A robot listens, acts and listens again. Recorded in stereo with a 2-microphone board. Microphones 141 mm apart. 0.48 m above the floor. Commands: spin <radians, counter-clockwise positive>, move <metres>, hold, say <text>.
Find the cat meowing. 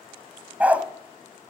hold
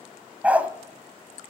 hold
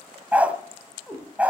spin 0.52
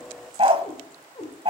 spin 2.62
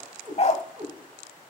spin -0.61
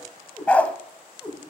say Facing the cat meowing.